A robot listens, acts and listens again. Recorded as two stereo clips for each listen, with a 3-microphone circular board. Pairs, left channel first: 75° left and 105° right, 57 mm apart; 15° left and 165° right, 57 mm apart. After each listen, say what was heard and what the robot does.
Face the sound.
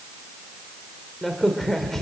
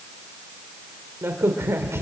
The crack: 160° left. Turn 160° left.
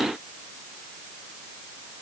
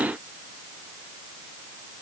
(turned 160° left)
Facing where the crack came from. I can't hear it now.